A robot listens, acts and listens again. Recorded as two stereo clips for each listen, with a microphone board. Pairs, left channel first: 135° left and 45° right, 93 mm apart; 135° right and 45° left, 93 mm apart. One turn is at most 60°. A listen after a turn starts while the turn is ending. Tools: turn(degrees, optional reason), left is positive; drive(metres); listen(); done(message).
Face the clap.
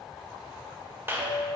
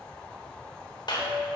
turn(degrees=-60, reason="The clap: 105° right.")
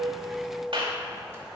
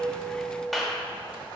turn(degrees=-45, reason="The clap is now 45° right.")
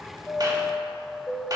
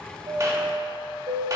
listen()
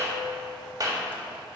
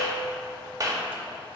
done("Found it: a clap, straight ahead.")